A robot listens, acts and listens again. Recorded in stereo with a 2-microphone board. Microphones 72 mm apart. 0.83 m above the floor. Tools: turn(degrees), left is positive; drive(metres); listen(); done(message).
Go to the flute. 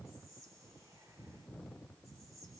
listen()
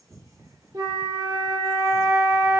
turn(degrees=-90)
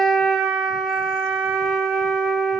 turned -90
drive(metres=1.0)
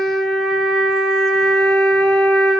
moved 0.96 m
drive(metres=1.0)
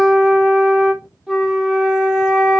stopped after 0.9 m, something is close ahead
turn(degrees=-10)
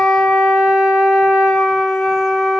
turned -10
done("Arrived at the flute, straight ahead.")